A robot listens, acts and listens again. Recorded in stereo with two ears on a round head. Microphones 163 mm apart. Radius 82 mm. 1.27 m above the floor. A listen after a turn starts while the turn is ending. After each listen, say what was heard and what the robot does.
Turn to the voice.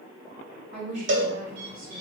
The woman speaking: about 40° right or 140° right. Turn 40° right.
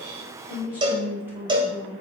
So it is at 15° right. Turn 15° right.
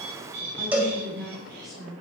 Found it: a woman speaking, straight ahead, over 4 m away.